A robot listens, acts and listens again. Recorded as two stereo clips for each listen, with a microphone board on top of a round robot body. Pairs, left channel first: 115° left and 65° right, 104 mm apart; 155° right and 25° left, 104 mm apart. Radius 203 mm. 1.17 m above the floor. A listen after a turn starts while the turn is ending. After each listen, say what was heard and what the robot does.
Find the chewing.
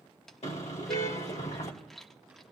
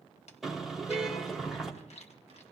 The chewing: 160° right. Turn 160° right.
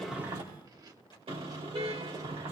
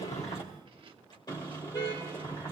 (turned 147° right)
The chewing is now 15° right. Turn 15° right.
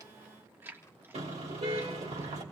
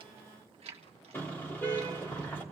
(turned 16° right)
Found it: chewing, straight ahead.